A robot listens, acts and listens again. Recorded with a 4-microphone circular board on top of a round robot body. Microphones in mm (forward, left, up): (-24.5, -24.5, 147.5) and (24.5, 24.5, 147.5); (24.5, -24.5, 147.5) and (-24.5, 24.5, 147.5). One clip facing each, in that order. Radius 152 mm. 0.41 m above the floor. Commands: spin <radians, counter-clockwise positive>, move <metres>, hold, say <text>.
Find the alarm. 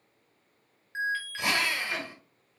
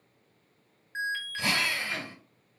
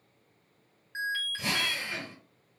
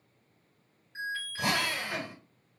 spin -0.87
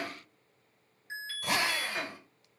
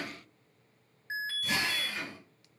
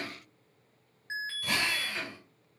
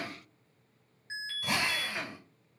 say Facing the alarm, 1 to 2 m away.